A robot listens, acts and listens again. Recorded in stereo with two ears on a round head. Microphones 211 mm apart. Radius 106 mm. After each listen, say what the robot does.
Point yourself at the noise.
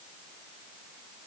Keep listening.
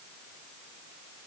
Keep listening.
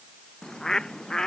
Turn 30° left.
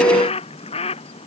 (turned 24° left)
Turn 155° left.
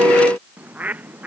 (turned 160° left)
Found it: a bird, straight ahead.